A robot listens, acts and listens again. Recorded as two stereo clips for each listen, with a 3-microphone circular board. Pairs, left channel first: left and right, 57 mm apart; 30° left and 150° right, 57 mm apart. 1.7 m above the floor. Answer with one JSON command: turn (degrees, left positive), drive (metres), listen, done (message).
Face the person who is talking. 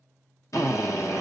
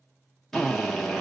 {"listen": true}
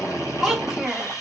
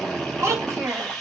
{"turn": -175}
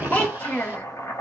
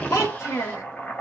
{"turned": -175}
{"turn": 30}
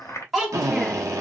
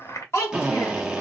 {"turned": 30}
{"done": "Facing the child speaking, 1 to 2 m away."}